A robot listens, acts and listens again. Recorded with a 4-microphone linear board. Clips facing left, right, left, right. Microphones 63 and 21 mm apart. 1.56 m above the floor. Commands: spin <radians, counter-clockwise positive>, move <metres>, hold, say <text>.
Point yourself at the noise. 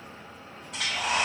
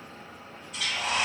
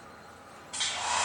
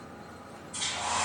spin 1.31
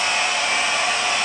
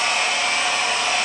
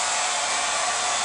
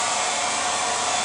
spin 0.52
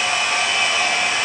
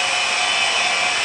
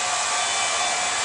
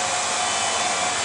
spin 0.26
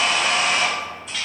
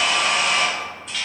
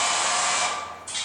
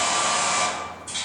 say Facing the hair dryer.